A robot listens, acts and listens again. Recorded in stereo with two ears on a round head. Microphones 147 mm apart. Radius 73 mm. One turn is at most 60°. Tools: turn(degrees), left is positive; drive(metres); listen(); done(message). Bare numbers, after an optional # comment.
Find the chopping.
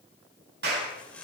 turn(30)
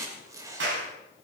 # So it is at 20° right.
turn(-20)
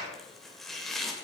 done("Facing the chopping, 2 to 4 m away.")